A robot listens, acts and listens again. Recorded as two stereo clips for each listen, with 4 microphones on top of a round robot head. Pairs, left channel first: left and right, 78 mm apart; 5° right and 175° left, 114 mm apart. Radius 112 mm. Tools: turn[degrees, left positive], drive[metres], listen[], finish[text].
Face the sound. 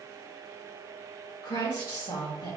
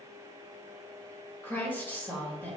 Thought: The woman speaking: 70° left.
Action: turn[70]
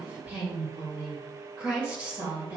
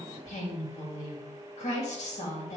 Thought: The woman speaking is now 20° right.
Action: turn[-20]
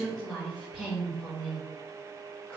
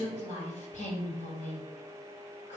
Action: finish[Found it: a woman speaking, straight ahead.]